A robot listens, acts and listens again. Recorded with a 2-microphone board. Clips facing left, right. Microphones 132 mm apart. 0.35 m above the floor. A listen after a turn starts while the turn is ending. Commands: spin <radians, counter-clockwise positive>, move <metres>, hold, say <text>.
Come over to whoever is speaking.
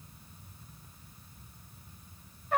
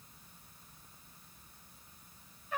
hold
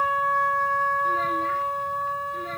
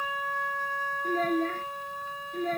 spin -0.79
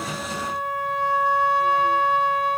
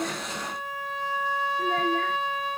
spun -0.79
hold
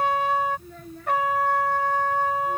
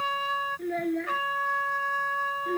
spin -1.57
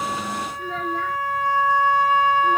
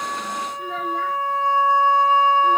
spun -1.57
move 1.0
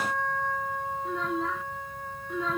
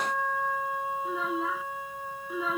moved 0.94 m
move 1.0
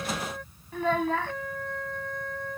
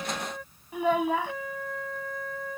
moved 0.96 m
spin -0.26
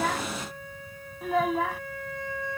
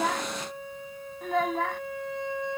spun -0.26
move 1.0
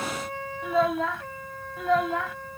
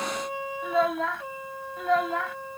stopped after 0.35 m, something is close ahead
say Arrived at the child speaking, straight ahead.